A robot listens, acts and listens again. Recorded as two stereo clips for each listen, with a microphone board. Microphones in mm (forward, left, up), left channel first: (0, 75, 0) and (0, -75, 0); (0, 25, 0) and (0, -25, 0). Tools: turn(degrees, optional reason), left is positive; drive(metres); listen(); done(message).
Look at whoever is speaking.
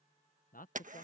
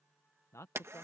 turn(degrees=90)
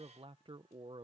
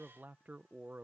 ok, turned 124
turn(degrees=-40, reason="So it is at 40° right.")
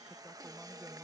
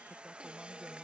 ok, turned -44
listen()
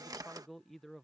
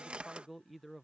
done("Found it: a man speaking, straight ahead.")